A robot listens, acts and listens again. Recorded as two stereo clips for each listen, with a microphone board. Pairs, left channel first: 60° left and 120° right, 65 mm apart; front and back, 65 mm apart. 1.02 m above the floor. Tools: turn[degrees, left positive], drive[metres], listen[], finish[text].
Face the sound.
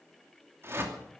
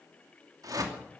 Thought: The whoosh: 165° right.
Action: turn[-165]
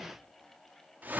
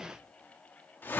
Thought: The whoosh is now 60° right.
Action: turn[-60]
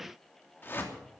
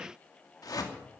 Action: finish[Facing the whoosh.]